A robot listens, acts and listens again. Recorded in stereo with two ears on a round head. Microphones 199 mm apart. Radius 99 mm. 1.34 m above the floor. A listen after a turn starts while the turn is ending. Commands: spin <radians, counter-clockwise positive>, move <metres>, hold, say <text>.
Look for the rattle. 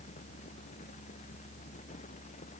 hold
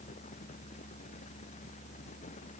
hold
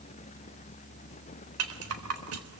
spin -1.57
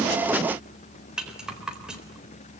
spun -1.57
say Found it: a rattle, straight ahead, 2 to 4 m away.